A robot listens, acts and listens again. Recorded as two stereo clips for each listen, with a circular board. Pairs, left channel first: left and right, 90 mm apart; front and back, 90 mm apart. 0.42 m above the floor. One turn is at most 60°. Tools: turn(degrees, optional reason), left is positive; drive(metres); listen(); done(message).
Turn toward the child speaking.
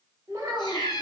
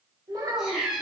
turn(degrees=-60, reason="The child speaking: 140° right.")
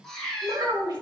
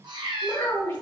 turn(degrees=-60, reason="The child speaking is now 65° right.")
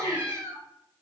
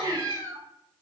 listen()
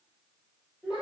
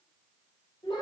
turn(degrees=-15, reason="The child speaking is now 15° right.")
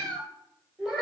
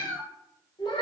done("Facing the child speaking, 1 to 2 m away.")